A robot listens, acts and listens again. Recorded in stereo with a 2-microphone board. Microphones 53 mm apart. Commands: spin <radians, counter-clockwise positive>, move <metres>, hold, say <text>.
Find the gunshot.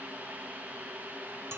hold
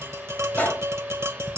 spin 0.61
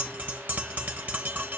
hold
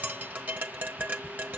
say I heard a gunshot, but can't make it out now. It was about straight ahead or 110° left.